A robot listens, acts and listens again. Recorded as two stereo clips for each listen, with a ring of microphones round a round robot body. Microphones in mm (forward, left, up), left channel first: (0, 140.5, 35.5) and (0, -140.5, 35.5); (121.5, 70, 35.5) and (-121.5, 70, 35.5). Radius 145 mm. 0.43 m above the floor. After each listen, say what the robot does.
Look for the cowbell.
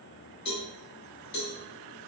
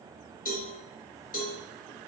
Turn 55° left.
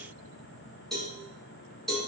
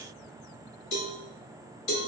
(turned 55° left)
Facing the cowbell.